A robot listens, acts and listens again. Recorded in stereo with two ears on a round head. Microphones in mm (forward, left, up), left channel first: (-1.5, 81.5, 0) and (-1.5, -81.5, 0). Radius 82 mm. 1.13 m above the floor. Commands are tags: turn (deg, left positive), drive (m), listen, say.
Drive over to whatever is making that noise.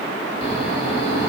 <turn deg="65"/>
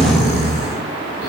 <turn deg="45"/>
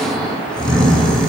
<drive m="1.0"/>
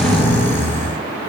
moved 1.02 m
<turn deg="15"/>
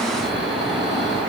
<drive m="1.0"/>
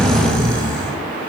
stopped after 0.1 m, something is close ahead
<say>I am next to the snoring.</say>